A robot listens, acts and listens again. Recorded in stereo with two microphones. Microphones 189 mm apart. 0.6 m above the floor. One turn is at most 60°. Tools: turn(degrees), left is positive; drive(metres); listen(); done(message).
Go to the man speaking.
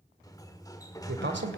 turn(degrees=-60)
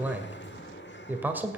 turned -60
turn(degrees=-10)
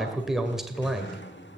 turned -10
drive(metres=1.0)
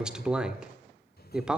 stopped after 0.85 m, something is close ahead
done("I am next to the man speaking.")